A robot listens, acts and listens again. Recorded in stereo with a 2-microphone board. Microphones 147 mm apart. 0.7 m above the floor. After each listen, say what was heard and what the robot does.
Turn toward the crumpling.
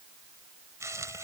The crumpling: about 20° right or 160° right. Turn 20° right.
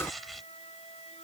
Found it: crumpling, straight ahead.